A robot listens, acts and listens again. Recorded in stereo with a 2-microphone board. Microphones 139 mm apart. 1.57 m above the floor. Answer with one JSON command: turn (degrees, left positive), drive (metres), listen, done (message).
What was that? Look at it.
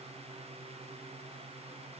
{"listen": true}
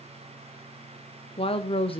{"turn": 40}
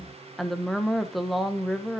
{"done": "Found it: a woman speaking, straight ahead, 1 to 2 m away."}